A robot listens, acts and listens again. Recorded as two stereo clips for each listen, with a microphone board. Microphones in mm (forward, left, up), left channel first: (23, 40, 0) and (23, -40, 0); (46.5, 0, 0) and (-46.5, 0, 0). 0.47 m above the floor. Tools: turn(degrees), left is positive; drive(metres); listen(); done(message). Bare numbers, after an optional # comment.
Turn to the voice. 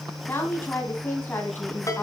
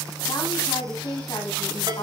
# The woman speaking: 30° left.
turn(30)
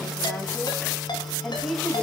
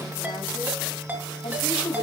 done("Facing the woman speaking.")